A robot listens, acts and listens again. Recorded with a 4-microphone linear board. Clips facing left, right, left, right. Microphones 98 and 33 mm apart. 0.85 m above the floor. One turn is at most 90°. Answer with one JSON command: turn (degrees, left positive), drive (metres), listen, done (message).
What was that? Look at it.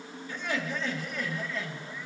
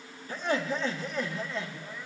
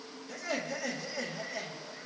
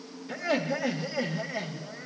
{"turn": -20}
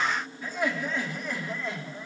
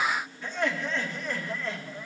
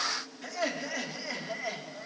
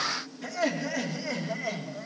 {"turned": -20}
{"turn": 20}
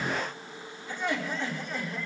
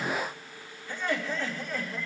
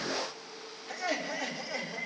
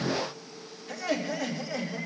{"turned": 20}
{"turn": 20}
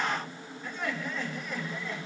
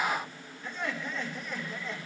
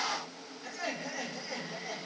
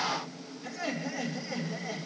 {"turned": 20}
{"done": "Facing the laughter, 2 to 4 m away."}